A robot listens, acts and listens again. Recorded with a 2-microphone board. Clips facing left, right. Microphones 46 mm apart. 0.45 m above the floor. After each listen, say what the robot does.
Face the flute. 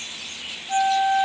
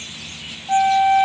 Turn 65° right.
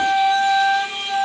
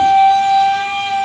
Turn 50° right.
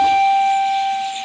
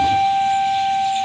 Found it: a flute, straight ahead.